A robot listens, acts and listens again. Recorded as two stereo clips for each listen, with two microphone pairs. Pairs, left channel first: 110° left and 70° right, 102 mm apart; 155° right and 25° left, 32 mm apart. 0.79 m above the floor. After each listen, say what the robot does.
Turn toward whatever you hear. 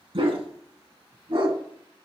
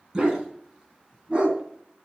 Turn 30° right.
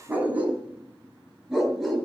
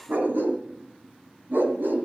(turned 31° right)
Turn 20° left.
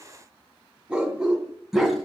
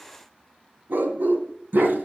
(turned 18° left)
Turn 20° left.
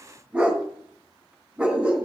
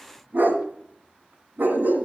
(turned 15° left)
Turn 10° left.
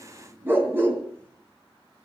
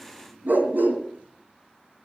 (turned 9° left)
Facing the dog barking.